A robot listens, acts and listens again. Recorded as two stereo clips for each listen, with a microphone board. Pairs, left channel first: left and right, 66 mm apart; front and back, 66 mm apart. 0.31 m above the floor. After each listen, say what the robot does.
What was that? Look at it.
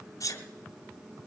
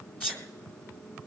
Turn 65° left.
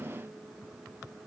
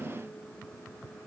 I heard a sneeze from this way, but can't make it out now.